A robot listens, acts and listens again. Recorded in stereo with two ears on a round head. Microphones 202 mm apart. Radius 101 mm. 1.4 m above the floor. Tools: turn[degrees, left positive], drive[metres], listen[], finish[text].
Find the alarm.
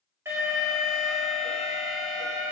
Action: turn[-30]
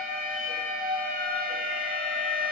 Thought: So it is at 140° right.
Action: turn[-140]
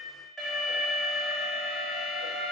Action: finish[Facing the alarm, 1 to 2 m away.]